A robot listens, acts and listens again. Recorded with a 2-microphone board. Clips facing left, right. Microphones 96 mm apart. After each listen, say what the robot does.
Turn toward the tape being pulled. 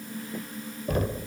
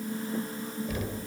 Keep listening.
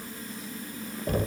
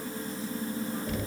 Keep listening.
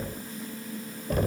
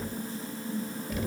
I can't make out tape being pulled, only knocking.